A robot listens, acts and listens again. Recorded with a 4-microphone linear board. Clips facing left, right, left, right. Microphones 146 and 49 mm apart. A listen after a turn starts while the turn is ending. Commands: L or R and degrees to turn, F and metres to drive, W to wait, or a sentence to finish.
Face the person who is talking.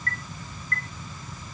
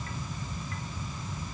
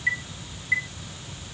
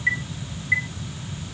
W
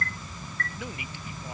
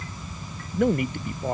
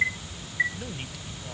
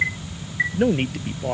R60
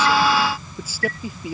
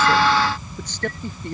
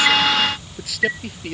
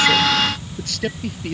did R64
Found it: a man speaking, straight ahead.